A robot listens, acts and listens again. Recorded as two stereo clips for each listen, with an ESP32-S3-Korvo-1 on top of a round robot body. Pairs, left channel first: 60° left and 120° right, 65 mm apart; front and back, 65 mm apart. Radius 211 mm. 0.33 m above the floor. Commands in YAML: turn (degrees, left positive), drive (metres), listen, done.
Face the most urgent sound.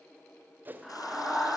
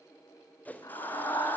turn: -30
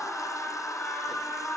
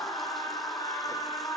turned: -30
done: "Found it: a scream, straight ahead."